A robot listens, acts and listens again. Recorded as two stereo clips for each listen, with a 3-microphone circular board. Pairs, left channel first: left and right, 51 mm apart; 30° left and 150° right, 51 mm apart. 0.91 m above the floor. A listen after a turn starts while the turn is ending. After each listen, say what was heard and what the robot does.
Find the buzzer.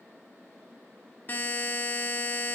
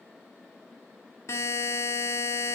The buzzer: 40° left. Turn 40° left.
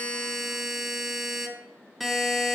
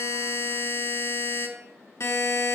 Facing the buzzer.